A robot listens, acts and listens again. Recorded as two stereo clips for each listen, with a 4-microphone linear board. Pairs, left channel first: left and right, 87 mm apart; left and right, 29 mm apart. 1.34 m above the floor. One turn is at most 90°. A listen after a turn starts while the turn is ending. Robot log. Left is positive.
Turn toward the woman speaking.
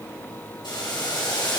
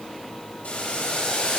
cmd idle
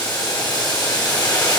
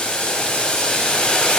cmd idle
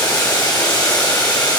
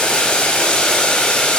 end: I can't make out a woman speaking to turn to.